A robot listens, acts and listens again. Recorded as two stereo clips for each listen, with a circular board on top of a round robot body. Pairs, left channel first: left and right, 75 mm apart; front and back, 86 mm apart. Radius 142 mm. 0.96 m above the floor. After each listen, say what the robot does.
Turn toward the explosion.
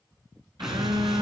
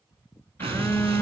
Turn 175° right.
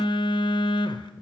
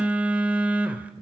Facing where the explosion came from. I can't hear it now.